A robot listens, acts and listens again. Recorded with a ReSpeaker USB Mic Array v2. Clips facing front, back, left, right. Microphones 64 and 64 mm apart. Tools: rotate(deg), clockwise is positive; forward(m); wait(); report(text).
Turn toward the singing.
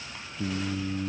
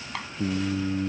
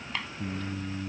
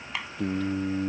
rotate(105)
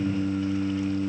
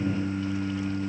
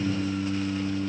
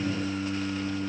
rotate(10)
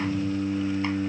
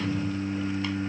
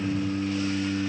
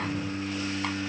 report("Facing the singing.")